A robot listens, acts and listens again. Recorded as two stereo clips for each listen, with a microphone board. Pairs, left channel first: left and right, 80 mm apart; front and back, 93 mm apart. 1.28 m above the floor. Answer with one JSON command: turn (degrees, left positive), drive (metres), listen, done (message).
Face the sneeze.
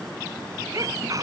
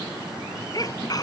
{"turn": -45}
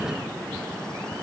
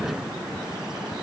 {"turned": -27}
{"turn": -20}
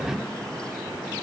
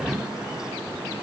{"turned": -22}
{"done": "I heard a sneeze from this way, but can't make it out now."}